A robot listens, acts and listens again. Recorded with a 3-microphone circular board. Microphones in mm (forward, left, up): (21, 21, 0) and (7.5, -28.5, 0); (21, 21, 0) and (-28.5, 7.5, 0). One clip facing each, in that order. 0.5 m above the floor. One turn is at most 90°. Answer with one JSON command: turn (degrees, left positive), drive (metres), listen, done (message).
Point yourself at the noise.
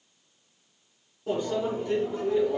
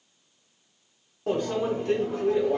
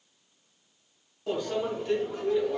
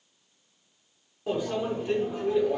{"turn": -90}
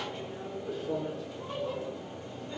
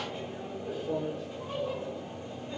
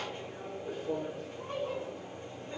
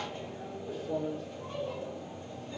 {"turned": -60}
{"turn": -30}
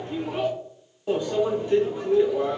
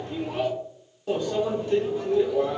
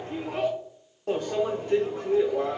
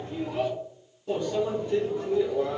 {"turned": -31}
{"done": "Found it: a microwave, straight ahead."}